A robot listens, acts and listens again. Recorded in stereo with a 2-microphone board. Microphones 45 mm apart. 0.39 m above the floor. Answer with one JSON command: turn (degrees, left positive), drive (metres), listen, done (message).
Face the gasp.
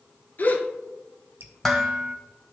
{"turn": 40}
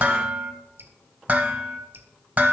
{"listen": true}
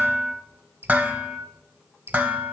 {"done": "I heard a gasp, but can't make it out now. It was about straight ahead or 100° left."}